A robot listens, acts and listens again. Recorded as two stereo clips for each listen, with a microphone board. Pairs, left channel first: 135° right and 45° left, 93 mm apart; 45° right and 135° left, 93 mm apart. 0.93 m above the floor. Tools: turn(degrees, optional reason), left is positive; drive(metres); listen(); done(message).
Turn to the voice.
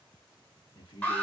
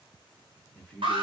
turn(degrees=-125, reason="The man speaking: 125° right.")
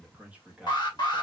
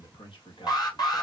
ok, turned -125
turn(degrees=-30, reason="The man speaking is now 30° right.")
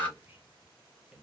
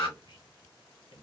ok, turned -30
turn(degrees=-35, reason="The man speaking is now 35° right.")
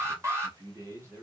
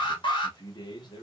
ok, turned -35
turn(degrees=-10, reason="The man speaking is now 10° right.")
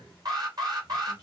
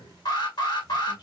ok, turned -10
done("Found it: a man speaking, straight ahead, 1 to 2 m away.")